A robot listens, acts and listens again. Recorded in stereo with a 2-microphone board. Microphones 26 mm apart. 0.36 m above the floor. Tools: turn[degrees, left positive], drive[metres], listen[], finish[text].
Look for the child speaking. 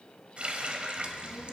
Thought: The child speaking: about 25° right or 155° right.
Action: turn[-25]
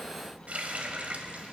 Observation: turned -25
Thought: So it is at 15° left.
Action: turn[15]
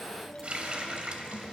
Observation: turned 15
Thought: The child speaking is now 15° left.
Action: turn[15]
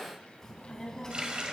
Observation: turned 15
Thought: The child speaking is now 25° left.
Action: turn[25]
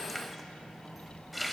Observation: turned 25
Thought: The child speaking is now 10° right.
Action: turn[-10]
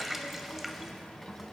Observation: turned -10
Action: finish[Facing the child speaking, 2 to 4 m away.]